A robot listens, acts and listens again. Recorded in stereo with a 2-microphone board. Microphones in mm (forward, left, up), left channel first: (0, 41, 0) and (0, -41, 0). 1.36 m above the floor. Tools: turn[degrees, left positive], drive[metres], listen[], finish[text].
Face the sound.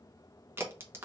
Thought: The crack: about 30° right or 150° right.
Action: turn[-30]
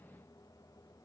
Action: listen[]
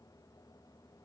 Action: finish[I heard a crack, but can't make it out now. It was about straight ahead or 120° right.]